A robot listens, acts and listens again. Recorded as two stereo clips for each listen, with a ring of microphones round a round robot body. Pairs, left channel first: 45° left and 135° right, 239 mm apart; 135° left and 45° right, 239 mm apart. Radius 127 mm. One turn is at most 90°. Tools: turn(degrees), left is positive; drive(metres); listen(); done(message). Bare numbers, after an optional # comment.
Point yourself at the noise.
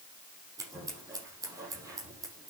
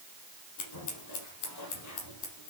# The scissors: 150° left.
turn(90)
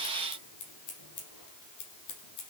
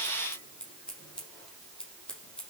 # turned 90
# The scissors is now 50° left.
turn(50)
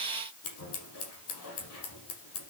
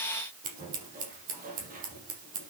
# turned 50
# The scissors is now 15° left.
turn(15)
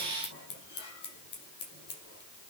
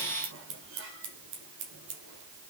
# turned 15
done("Facing the scissors, over 4 m away.")